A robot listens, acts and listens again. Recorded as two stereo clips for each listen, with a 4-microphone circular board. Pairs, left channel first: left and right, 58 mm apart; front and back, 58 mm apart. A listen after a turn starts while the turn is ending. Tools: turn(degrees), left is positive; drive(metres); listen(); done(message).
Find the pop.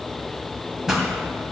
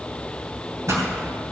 turn(degrees=-170)
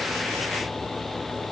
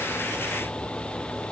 done("Facing where the pop came from. I can't hear it now.")